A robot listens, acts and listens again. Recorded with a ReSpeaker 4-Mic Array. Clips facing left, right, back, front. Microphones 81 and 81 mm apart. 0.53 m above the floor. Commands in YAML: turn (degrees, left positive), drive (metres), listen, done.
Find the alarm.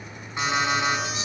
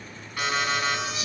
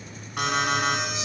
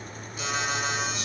turn: 160
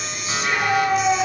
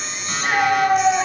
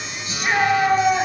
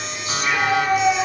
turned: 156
done: "Facing the alarm."